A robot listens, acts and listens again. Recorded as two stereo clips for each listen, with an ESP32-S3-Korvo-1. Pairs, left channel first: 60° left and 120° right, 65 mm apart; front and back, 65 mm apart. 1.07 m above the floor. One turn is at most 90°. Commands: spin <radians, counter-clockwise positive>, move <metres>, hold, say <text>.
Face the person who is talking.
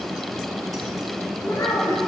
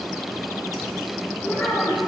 spin 0.96
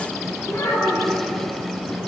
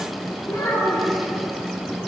spin 0.26
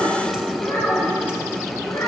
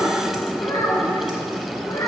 say Found it: a child speaking, straight ahead, over 4 m away.